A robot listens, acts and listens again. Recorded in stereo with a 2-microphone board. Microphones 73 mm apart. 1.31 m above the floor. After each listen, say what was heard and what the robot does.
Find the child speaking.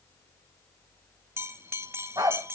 Keep listening.
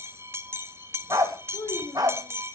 The child speaking: about 65° left or 115° left. Turn 65° left.
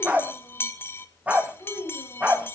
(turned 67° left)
So it is at 45° left. Turn 45° left.
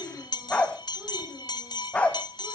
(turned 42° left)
Keep listening.
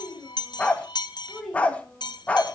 Found it: a child speaking, straight ahead, over 4 m away.